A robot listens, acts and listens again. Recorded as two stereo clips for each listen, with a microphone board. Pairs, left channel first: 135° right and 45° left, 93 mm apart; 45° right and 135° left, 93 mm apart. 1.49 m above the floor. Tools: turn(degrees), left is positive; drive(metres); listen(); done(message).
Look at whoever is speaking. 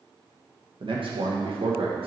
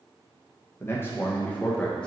turn(degrees=35)
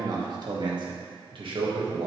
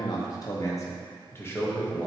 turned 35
turn(degrees=25)
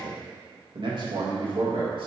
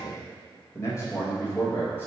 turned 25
turn(degrees=20)
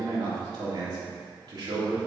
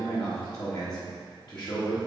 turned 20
done("Facing the man speaking.")